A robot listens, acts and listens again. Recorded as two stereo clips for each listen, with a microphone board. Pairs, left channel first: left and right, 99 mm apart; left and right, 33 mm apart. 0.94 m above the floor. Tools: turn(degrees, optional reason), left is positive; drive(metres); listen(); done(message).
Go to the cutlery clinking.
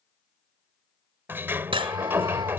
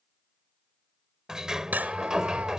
turn(degrees=-65, reason="The cutlery clinking: about 65° right or 115° right.")
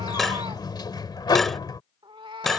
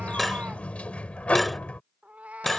drive(metres=1.0)
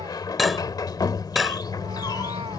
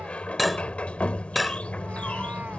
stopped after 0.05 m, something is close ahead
done("Blocked. The cutlery clinking is further on, straight ahead.")